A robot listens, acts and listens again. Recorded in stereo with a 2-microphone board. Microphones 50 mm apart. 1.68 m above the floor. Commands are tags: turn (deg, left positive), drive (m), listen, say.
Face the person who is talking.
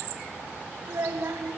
<turn deg="-50"/>
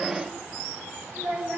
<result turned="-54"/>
<say>Facing the child speaking, over 4 m away.</say>